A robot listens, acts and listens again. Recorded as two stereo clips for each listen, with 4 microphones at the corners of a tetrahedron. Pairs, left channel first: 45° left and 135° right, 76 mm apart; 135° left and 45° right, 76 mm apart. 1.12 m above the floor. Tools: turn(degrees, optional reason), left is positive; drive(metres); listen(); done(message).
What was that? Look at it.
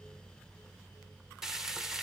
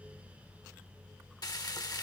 turn(degrees=140, reason="The frying: 140° left.")
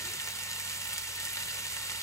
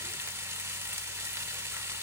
done("Facing the frying.")